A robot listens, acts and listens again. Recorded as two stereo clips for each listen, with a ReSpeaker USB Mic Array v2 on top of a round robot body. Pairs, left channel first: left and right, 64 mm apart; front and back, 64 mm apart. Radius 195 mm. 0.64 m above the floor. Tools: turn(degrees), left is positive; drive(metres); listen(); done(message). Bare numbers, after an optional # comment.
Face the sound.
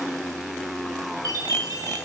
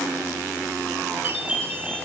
# The chime: 115° right.
turn(-115)
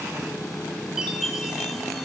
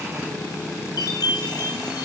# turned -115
done("Found it: a chime, straight ahead, 2 to 4 m away.")